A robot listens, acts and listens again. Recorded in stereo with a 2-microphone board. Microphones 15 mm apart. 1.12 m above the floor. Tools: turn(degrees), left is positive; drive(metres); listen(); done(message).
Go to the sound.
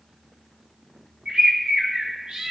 turn(degrees=-55)
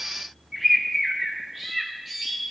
drive(metres=1.0)
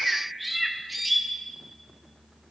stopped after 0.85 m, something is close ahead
done("I am next to the bird.")